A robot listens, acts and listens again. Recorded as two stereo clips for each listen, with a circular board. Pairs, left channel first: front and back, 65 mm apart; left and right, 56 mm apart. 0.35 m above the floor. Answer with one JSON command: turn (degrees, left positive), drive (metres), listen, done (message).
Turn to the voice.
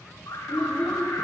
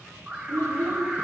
{"turn": -80}
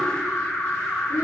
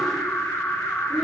{"listen": true}
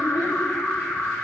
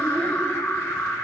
{"listen": true}
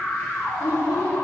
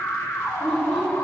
{"turn": 10}
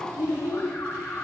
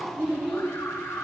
{"done": "Facing the child speaking, over 4 m away."}